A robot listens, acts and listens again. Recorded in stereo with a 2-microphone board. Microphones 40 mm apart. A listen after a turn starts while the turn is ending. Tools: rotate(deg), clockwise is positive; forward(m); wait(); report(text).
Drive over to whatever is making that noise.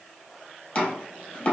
rotate(-35)
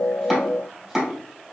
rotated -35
forward(1.0)
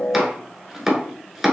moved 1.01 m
forward(1.0)
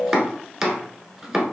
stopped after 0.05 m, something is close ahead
rotate(10)
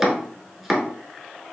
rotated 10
report("I am next to the chopping.")